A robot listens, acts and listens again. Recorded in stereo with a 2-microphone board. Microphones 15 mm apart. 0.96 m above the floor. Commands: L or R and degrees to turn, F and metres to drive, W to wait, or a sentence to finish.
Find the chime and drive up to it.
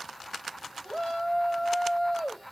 W
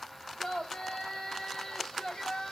W
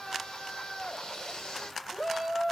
I can't make out a chime, only a shout.